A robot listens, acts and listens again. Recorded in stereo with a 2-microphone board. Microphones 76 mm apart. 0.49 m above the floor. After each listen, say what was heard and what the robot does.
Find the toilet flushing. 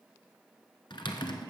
Keep listening.
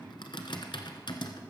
Keep listening.
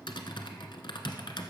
I can't make out a toilet flushing, only typing on a keyboard.